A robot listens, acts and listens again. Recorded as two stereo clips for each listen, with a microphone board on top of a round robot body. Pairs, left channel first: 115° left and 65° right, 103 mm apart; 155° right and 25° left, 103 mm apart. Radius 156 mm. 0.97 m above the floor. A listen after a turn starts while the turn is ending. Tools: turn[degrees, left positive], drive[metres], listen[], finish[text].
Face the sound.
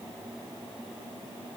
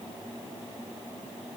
Action: listen[]
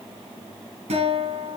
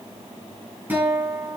Thought: The guitar: 50° right.
Action: turn[-50]
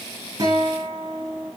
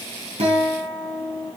Action: finish[Facing the guitar.]